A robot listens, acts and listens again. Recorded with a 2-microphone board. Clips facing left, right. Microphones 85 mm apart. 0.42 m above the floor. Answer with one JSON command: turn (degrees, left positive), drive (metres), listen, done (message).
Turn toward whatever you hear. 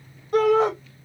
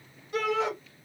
{"turn": 50}
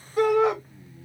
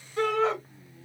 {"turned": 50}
{"turn": 15}
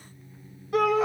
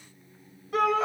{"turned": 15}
{"done": "Found it: a shout, straight ahead, 1 to 2 m away."}